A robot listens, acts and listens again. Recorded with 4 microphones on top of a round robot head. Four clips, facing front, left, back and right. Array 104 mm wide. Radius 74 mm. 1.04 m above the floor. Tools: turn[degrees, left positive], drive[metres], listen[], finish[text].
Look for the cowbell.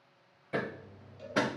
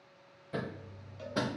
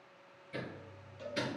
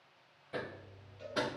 Thought: The cowbell: 75° left.
Action: turn[75]
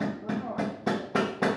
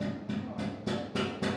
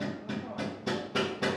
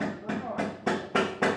Action: listen[]
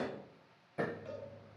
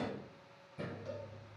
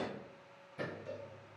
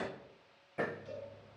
Thought: The cowbell is now 20° left.
Action: turn[20]
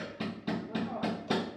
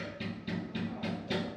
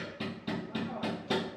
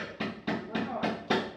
Action: listen[]
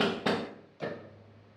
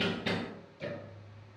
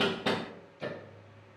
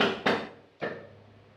Action: listen[]
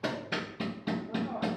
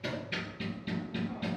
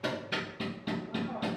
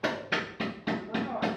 Action: finish[Facing where the cowbell came from. I can't hear it now.]